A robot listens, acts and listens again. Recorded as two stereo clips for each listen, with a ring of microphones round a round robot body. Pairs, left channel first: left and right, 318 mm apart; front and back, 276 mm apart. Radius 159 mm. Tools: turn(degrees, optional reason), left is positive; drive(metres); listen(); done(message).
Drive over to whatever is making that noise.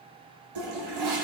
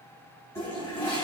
turn(degrees=-80, reason="The toilet flushing: 80° right.")
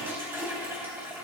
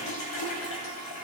drive(metres=1.0)
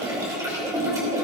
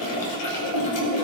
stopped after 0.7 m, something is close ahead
turn(degrees=-10, reason="The toilet flushing is now 10° right.")
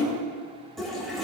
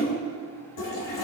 done("Something is in my way. I am facing the toilet flushing but have not reached it.")